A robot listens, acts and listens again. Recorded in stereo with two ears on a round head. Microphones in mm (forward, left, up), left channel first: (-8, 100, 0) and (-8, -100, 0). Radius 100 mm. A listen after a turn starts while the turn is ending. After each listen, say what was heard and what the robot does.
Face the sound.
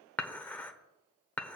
Turn 30° left.
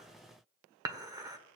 So it is at 20° right. Turn 20° right.
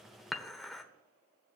Found it: dishes clattering, straight ahead.